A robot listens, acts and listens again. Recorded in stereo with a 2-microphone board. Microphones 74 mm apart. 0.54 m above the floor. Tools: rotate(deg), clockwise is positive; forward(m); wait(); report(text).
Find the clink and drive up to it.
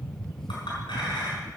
rotate(-90)
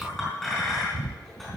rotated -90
forward(1.0)
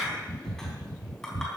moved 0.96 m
forward(1.0)
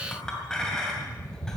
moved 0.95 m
rotate(-10)
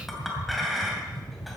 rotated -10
forward(1.0)
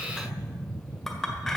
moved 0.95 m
forward(1.0)
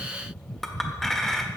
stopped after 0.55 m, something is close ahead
report("Arrived at the clink, straight ahead.")